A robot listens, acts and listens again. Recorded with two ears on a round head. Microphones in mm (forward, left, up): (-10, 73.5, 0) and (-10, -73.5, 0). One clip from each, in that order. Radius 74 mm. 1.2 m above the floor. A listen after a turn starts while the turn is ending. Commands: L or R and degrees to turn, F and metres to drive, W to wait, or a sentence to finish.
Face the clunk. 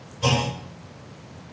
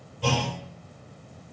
L45
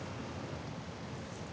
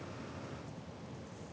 W
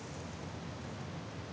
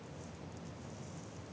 I heard a clunk, but can't make it out now. It was about straight ahead or 90° left.